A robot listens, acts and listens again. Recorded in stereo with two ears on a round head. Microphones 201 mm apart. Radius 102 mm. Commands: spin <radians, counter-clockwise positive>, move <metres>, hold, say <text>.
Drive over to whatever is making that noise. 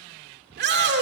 spin -0.87
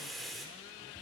hold
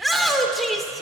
move 1.0
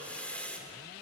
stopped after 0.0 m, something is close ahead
say Blocked. The shout is further on, straight ahead.